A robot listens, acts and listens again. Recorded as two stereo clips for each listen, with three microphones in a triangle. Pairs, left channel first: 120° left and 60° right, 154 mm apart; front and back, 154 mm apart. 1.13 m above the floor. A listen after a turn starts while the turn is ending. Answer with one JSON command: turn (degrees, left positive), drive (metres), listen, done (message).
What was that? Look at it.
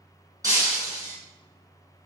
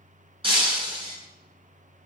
{"turn": -125}
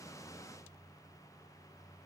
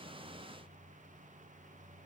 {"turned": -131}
{"done": "I heard breaking glass from this way, but can't make it out now."}